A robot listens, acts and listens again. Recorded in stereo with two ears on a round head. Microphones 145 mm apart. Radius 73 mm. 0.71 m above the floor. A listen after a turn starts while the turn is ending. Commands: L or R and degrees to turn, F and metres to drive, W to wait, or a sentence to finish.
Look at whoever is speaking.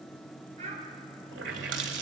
R40
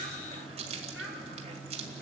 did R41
Found it: a child speaking, straight ahead, over 4 m away.